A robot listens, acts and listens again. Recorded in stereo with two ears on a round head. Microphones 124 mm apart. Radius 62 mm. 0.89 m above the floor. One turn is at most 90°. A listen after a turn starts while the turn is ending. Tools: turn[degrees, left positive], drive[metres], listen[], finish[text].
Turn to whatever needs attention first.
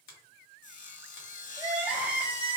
Action: turn[-30]
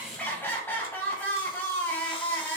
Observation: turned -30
Thought: So it is at 20° left.
Action: turn[20]
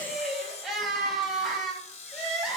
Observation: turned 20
Action: finish[Found it: crying, straight ahead, 1 to 2 m away.]